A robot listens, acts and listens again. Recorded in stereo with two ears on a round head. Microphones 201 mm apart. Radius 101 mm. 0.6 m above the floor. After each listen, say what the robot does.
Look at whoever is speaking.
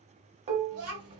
Turn 75° right.
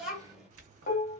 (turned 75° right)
Facing the child speaking, 1 to 2 m away.